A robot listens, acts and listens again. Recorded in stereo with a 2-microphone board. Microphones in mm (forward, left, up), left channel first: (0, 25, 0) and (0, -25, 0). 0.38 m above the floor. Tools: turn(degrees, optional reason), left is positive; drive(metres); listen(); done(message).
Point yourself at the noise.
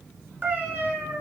turn(degrees=-40, reason="The cat meowing: about 40° right or 140° right.")
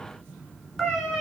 done("Found it: a cat meowing, straight ahead.")